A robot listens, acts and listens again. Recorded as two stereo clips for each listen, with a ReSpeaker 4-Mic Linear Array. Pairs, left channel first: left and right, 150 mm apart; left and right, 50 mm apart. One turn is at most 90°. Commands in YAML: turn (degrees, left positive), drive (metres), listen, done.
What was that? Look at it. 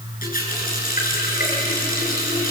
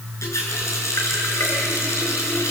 turn: 75
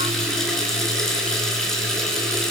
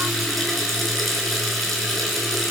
done: "Facing the running tap."